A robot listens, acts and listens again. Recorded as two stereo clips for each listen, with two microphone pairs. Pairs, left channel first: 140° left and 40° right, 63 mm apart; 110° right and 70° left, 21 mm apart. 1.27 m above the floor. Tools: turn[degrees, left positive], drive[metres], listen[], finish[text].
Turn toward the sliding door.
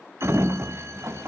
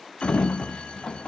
Thought: The sliding door: 80° right.
Action: turn[-80]
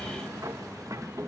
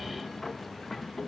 Thought: The sliding door is now 25° right.
Action: turn[-25]
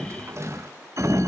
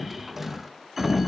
Action: finish[Found it: a sliding door, straight ahead, under 1 m away.]